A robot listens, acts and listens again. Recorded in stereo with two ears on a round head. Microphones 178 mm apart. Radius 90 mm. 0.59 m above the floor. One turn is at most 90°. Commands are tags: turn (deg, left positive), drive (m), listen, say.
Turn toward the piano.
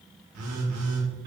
<listen/>
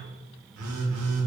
<listen/>
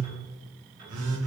<say>I can't make out a piano, only a phone buzzing.</say>